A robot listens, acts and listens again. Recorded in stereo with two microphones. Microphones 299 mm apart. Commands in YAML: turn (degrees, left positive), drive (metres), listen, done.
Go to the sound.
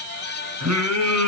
turn: -65
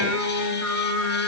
turn: -50
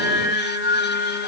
turn: -10
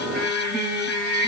drive: 1.0
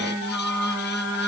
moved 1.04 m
drive: 1.0
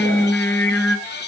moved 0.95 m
drive: 1.0
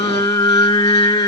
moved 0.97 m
turn: 15
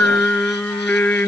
drive: 1.0
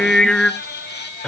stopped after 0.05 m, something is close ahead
done: "I am next to the singing."